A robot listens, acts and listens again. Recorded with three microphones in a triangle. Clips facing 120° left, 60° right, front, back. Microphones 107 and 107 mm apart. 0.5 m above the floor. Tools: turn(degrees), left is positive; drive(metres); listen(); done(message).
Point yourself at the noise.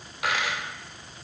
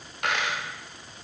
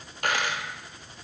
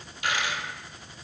turn(degrees=30)
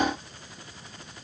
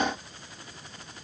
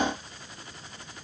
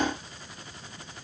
done("I heard a dropped coin from this way, but can't make it out now.")